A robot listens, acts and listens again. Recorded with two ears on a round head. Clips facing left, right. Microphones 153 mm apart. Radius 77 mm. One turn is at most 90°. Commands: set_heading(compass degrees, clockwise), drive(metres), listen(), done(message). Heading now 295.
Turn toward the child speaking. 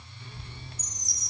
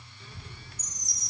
set_heading(355)
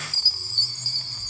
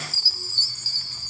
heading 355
set_heading(55)
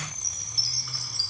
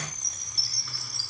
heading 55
listen()
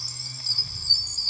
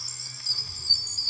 done("Facing the child speaking, over 4 m away.")